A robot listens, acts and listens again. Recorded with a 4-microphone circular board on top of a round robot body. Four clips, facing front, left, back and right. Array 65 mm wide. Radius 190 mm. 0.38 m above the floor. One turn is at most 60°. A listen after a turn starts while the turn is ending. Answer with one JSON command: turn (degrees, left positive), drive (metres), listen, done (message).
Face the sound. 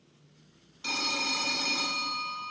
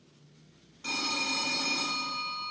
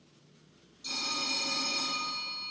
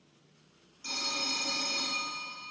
{"turn": 20}
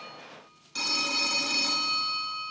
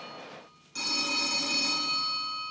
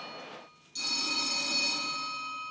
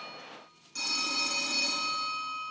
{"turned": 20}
{"done": "Found it: a phone ringing, straight ahead."}